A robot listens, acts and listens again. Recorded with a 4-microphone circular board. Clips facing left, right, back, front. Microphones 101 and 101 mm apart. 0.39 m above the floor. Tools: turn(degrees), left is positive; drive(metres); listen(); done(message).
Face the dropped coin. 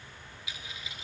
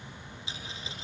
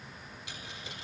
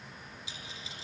turn(degrees=-150)
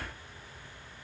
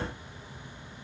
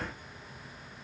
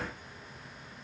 done("Facing where the dropped coin came from. I can't hear it now.")